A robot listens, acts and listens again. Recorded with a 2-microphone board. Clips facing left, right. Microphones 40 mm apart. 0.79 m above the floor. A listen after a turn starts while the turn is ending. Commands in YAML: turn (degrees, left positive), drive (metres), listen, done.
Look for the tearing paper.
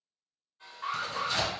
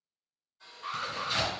turn: -30
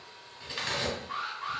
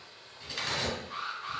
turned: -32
turn: 20
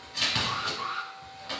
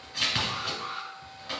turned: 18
done: "Found it: tearing paper, straight ahead, 1 to 2 m away."